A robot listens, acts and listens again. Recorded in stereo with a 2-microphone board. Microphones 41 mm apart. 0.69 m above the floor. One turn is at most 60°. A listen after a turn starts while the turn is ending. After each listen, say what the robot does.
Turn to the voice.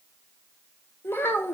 Turn 60° left.
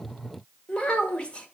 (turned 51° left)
Turn 30° left.
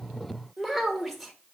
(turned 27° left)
Found it: a child speaking, straight ahead, 1 to 2 m away.